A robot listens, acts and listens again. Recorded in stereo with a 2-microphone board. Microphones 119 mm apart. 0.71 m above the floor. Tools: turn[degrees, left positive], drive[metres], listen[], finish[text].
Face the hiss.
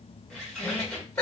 Action: listen[]
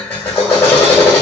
Action: listen[]
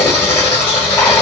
Action: finish[I can't make out a hiss, only a drill and a squeak.]